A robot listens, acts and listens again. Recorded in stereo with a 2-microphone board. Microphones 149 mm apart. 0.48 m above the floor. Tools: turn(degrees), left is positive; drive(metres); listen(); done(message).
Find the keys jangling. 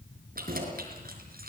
turn(degrees=-70)
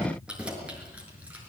turn(degrees=-10)
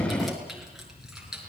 done("Facing the keys jangling.")